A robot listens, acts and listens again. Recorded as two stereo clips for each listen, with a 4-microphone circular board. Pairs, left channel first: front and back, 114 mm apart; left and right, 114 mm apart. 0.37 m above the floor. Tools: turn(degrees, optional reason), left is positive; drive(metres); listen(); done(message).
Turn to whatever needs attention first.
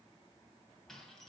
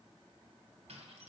listen()
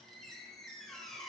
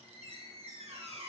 listen()
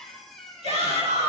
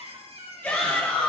turn(degrees=165, reason="The shout: 165° left.")
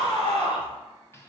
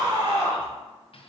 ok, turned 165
turn(degrees=-45, reason="The shout is now 45° right.")
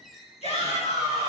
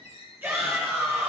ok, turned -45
turn(degrees=-20, reason="The shout is now 20° right.")
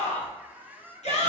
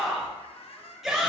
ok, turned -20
done("Found it: a shout, straight ahead, over 4 m away.")